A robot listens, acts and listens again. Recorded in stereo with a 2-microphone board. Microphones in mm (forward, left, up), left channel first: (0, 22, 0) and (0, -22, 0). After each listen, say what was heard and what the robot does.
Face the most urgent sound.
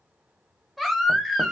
Turn 30° left.
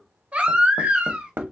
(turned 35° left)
So it is at 35° right. Turn 35° right.
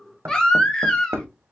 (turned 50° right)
The baby crying is now 15° left. Turn 15° left.
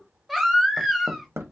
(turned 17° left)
Found it: a baby crying, straight ahead, under 1 m away.